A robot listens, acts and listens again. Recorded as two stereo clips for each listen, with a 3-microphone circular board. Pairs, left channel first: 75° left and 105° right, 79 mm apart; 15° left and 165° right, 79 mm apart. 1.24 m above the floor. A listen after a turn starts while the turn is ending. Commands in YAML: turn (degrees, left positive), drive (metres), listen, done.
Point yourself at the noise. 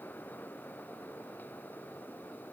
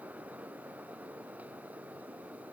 listen: true
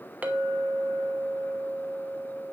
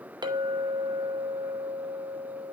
turn: -175
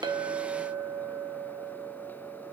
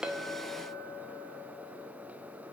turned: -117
turn: -60
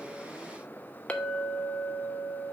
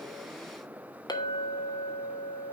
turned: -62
done: "Found it: a clink, straight ahead."